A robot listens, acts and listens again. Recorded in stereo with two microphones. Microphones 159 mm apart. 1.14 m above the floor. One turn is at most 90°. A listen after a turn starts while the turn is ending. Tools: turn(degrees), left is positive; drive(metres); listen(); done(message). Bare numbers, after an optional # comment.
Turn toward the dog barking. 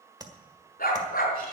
# The dog barking: about 60° left or 120° left.
turn(60)
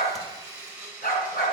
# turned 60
# So it is at 70° left.
turn(70)
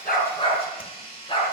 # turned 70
# The dog barking is now 35° left.
turn(35)
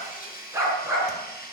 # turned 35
# The dog barking is now 15° right.
turn(-15)
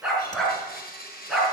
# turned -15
done("Found it: a dog barking, straight ahead, over 4 m away.")